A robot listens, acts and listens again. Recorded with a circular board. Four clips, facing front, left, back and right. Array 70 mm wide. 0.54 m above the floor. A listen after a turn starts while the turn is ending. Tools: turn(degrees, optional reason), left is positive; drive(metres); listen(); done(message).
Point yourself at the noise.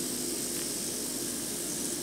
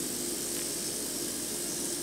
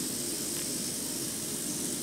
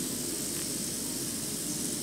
listen()
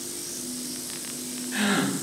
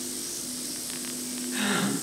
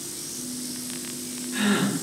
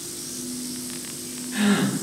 done("Facing the gasp.")